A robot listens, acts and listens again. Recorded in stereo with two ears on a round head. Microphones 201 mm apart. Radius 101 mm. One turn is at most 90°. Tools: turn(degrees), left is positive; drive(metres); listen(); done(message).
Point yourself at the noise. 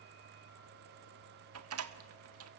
turn(degrees=-70)
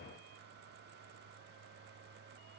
listen()
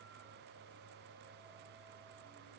done("I heard a door slam, but can't make it out now. It was about straight ahead or 40° right.")